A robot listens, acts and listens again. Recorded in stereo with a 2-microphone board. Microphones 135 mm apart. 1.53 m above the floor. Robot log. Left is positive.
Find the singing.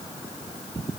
cmd idle
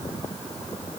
cmd idle
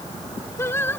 note: The singing: about 15° left or 165° left.
cmd yaw +15
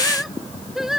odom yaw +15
cmd yaw -30
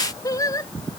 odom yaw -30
note: So it is at 25° left.
cmd yaw +25
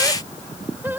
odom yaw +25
note: The singing is now 15° right.
cmd yaw -15
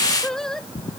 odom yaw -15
end: Found it: singing, straight ahead.